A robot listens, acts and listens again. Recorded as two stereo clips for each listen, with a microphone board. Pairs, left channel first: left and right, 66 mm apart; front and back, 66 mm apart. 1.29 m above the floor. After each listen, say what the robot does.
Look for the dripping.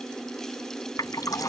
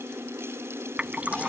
Turn 110° left.
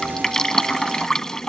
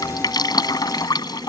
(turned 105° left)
Turn 10° left.
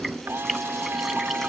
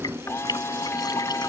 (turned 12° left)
Keep listening.
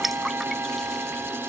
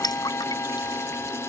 Facing the dripping.